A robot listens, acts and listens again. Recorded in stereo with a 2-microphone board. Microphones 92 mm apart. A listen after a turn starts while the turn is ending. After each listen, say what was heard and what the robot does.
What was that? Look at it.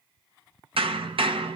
Turn 90° right.
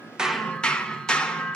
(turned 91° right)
So it is at 10° left. Turn 10° left.
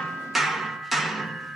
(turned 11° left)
Facing the hammering.